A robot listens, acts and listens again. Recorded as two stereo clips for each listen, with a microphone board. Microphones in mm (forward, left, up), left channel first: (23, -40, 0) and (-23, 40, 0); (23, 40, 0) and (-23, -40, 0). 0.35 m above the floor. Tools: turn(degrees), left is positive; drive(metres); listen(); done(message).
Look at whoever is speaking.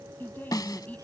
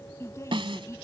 turn(degrees=10)
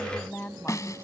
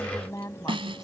turn(degrees=10)
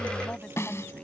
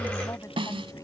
listen()
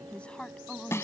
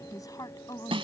turn(degrees=20)
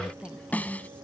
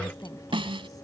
turn(degrees=15)
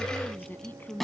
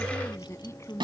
turn(degrees=10)
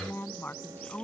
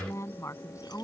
done("Facing the woman speaking.")